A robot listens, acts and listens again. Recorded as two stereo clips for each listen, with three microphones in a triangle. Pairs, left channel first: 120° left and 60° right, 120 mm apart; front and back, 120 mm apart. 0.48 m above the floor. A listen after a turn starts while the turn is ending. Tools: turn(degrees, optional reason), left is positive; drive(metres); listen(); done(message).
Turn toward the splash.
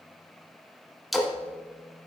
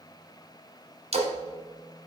turn(degrees=-150, reason="The splash: 150° right.")
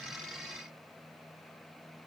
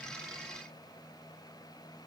done("Facing where the splash came from. I can't hear it now.")